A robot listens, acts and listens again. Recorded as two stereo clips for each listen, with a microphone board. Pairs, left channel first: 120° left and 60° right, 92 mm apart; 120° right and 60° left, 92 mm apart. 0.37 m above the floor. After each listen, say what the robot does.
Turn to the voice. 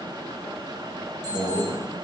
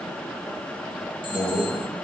Turn 175° right.
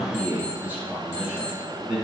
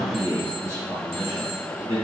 Turn 20° left.
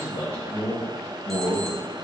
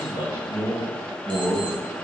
Turn 10° left.
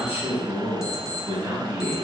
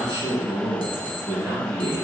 Found it: a man speaking, straight ahead.